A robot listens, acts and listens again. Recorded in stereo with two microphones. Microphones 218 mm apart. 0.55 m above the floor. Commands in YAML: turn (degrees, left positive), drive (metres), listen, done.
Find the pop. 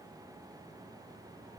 listen: true
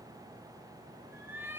listen: true
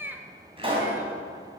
turn: -25
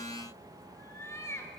listen: true
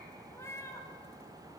done: "I heard a pop, but can't make it out now. It was about straight ahead or 130° right."